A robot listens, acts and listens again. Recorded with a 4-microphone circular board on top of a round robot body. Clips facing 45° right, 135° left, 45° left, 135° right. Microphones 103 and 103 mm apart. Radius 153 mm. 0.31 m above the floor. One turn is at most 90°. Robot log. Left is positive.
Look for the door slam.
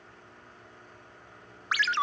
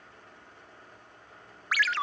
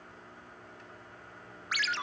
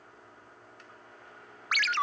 cmd idle
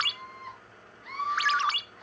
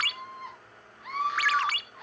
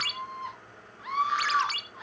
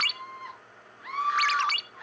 cmd idle
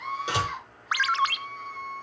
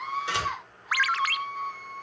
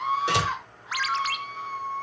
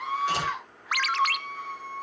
note: The door slam: 25° left.
cmd yaw +25
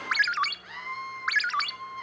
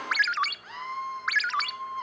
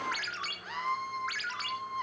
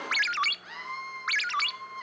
end: Facing where the door slam came from. I can't hear it now.